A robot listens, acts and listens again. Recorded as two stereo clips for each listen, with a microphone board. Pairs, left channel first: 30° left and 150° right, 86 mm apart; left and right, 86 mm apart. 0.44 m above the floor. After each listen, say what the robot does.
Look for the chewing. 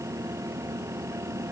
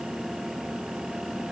Keep listening.
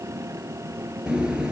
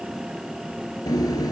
Turn 130° left.
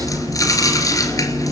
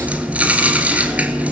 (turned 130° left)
Turn 15° right.
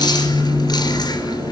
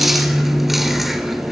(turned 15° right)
Facing the chewing.